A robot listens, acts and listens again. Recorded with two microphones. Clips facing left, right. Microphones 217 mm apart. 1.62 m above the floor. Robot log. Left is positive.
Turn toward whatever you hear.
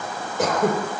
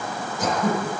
note: The throat clearing: about 75° left or 105° left.
cmd yaw +75
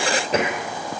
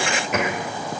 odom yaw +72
note: So it is at 35° left.
cmd yaw +35
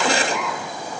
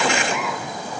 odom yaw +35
end: Found it: throat clearing, straight ahead, over 4 m away.